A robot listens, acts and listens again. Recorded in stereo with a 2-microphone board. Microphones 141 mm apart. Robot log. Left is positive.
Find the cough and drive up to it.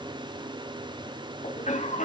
note: The cough: about 60° left or 120° left.
cmd yaw +60
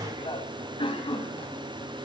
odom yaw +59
note: So it is at 45° left.
cmd yaw +45
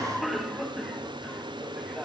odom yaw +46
cmd fwd 1.0
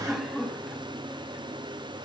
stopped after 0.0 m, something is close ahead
end: Blocked. The cough is further on, straight ahead.